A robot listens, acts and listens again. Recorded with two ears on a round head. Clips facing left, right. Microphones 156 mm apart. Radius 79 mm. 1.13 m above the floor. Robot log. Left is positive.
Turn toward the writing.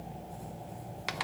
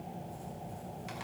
cmd idle
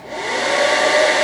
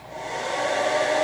cmd idle
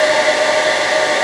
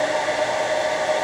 end: I can't make out writing to turn to.